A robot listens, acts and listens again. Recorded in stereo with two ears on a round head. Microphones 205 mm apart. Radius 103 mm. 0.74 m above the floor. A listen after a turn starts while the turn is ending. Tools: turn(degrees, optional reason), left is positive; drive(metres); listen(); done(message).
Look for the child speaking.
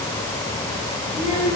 turn(degrees=-35, reason="The child speaking: about 35° right or 145° right.")
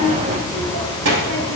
turn(degrees=-95, reason="So it is at 95° right.")
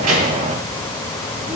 listen()
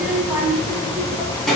done("Found it: a child speaking, straight ahead, 2 to 4 m away.")